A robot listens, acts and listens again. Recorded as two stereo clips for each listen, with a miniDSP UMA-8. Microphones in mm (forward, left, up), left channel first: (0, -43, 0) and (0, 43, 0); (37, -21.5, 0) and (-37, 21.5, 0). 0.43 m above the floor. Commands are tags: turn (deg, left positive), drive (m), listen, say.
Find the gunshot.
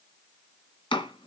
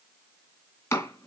<listen/>
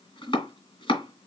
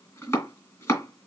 <listen/>
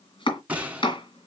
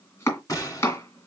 <turn deg="15"/>
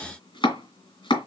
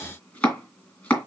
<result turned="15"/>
<say>I heard a gunshot from this way, but can't make it out now.</say>